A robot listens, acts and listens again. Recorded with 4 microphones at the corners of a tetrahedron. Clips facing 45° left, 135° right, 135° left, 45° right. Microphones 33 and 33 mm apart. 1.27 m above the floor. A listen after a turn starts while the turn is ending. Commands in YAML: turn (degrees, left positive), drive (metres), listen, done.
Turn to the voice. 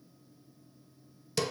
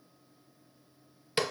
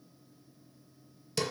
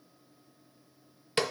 listen: true
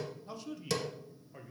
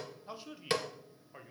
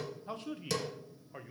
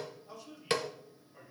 turn: 160
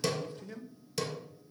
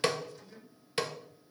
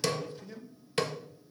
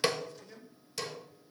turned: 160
turn: 60
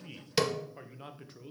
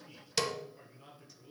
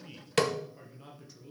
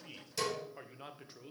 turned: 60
done: "Facing the man speaking, under 1 m away."